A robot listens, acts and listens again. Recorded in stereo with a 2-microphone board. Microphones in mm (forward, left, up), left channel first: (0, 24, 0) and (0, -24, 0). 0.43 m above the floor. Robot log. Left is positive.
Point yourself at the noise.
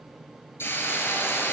note: The hiss: about 55° left or 125° left.
cmd yaw +55
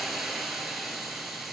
end: Facing the hiss.